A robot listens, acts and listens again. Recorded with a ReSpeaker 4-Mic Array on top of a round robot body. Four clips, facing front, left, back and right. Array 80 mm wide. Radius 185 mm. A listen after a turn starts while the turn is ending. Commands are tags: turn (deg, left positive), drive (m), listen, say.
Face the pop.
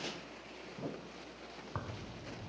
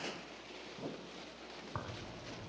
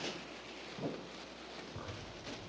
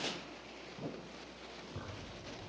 <listen/>
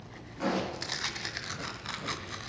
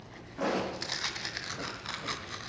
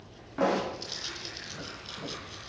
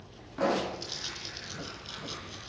<turn deg="-165"/>
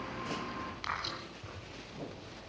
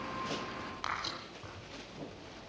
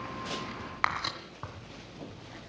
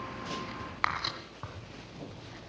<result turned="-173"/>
<turn deg="10"/>
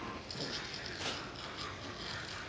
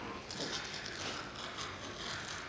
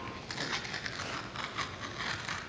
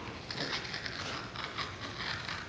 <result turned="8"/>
<say>Facing where the pop came from. I can't hear it now.</say>